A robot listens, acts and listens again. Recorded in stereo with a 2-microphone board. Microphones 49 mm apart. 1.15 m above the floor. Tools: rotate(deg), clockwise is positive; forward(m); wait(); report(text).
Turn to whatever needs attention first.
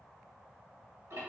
wait()
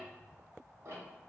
wait()
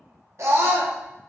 rotate(60)
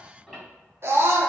rotate(60)
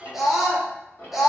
report("Facing the scream, under 1 m away.")